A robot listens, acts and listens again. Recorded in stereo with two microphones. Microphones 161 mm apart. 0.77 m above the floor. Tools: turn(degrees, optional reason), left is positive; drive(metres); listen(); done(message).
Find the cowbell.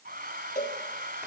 turn(degrees=55, reason="The cowbell: about 55° left or 125° left.")
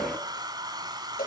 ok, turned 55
turn(degrees=70, reason="So it is at 70° left.")
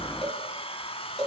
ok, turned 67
done("Facing the cowbell.")